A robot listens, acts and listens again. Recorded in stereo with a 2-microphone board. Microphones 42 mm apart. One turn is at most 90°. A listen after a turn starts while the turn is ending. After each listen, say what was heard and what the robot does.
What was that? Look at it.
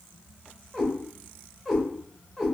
Turn 30° right.
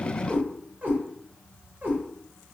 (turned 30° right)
So it is at 130° right. Turn 90° right.
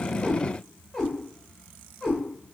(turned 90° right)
Found it: a cat meowing, straight ahead, 2 to 4 m away.